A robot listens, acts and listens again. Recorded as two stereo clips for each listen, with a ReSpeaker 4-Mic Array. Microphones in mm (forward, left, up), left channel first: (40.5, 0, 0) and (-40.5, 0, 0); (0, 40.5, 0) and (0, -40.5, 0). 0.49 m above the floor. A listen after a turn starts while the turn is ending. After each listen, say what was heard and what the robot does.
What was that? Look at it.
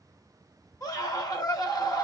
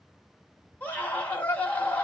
The scream: 25° left. Turn 25° left.
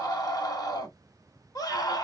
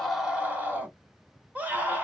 The scream is now 25° right. Turn 25° right.
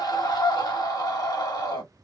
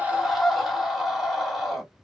Found it: a scream, straight ahead, 1 to 2 m away.